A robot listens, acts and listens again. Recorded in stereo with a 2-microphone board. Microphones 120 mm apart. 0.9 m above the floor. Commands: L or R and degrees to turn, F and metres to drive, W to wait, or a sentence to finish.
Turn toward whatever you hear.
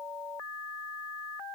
W
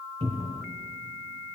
R60
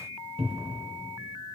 R55
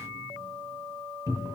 R30
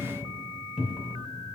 Found it: a cupboard door, straight ahead.